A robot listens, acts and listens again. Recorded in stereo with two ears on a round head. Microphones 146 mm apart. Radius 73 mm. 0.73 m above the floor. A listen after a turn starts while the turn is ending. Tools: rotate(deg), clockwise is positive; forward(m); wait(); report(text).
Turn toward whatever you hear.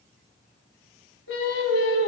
rotate(-90)
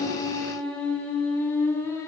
rotate(-15)
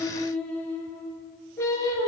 rotate(-20)
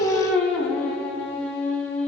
report("Found it: singing, straight ahead.")